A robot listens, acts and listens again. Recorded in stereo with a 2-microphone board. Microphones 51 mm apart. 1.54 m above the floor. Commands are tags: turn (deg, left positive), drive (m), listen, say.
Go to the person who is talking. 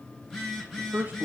<turn deg="-35"/>
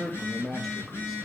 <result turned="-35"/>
<drive m="1.0"/>
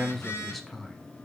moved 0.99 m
<drive m="1.0"/>
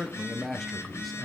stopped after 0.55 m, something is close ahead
<say>Arrived at the man speaking, straight ahead.</say>